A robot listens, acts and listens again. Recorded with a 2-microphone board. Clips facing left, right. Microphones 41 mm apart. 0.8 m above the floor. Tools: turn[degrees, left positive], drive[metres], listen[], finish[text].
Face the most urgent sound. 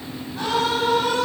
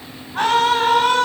Thought: The scream: about 60° right or 120° right.
Action: turn[-60]
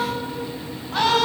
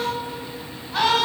Action: finish[Facing the scream.]